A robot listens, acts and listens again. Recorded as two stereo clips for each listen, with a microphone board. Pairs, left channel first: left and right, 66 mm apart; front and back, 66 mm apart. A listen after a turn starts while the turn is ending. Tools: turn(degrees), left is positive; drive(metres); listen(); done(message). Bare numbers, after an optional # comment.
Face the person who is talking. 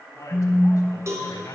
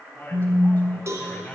# The man speaking: 65° left.
turn(65)
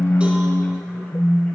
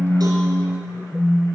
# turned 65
listen()
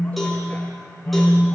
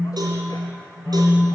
listen()
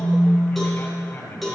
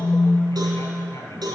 # The man speaking is now 35° left.
turn(35)
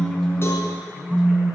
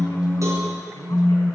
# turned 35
listen()
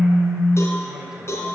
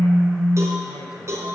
listen()
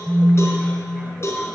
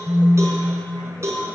done("Facing where the man speaking came from. I can't hear it now.")